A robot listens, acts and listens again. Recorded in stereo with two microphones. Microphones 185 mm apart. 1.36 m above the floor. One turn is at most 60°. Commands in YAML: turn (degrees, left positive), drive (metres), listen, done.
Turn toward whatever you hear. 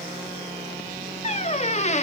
turn: 40
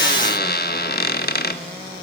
turn: 60
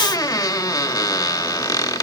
turn: 20
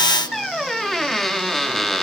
done: "Found it: a squeak, straight ahead."